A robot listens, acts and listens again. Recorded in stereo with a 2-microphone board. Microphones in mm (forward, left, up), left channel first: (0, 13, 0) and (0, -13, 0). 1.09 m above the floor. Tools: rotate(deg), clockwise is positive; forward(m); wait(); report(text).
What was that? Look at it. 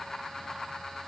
wait()
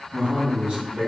rotate(55)
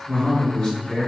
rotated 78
rotate(-30)
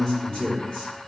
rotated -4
rotate(-35)
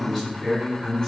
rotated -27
rotate(-15)
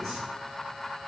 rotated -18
wait()
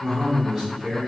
report("Facing the man speaking, 2 to 4 m away.")